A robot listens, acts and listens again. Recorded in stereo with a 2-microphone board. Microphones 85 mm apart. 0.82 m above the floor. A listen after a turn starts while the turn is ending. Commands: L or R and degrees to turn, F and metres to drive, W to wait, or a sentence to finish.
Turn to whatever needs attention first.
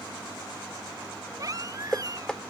R40
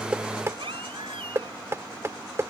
R95
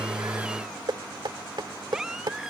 R10
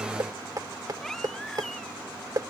W
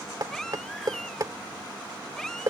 Found it: a baby crying, straight ahead.